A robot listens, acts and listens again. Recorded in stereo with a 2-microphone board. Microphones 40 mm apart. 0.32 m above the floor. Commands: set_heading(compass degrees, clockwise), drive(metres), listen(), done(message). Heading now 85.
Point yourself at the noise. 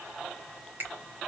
set_heading(130)
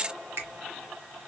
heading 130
set_heading(215)
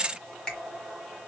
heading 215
set_heading(195)
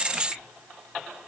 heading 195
listen()
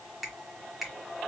done("Facing the finger snap.")